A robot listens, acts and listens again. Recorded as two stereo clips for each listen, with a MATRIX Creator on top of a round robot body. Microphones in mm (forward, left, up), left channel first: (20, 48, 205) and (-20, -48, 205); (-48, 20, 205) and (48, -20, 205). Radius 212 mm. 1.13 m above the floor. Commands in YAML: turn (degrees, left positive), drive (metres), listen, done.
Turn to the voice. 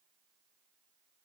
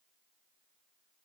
listen: true
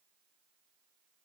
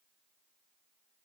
listen: true
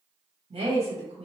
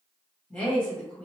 turn: -125
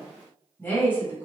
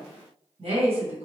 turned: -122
done: "Found it: a woman speaking, straight ahead, 1 to 2 m away."